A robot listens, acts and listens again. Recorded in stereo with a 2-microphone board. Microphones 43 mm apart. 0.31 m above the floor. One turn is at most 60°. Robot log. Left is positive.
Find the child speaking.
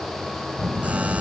cmd yaw -30
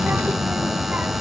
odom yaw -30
note: So it is at 135° right.
cmd yaw -60
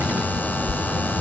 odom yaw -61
note: The child speaking is now 75° right.
cmd yaw -60
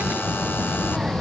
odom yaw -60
note: The child speaking is now 10° right.
cmd yaw -10
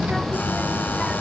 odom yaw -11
end: Facing the child speaking.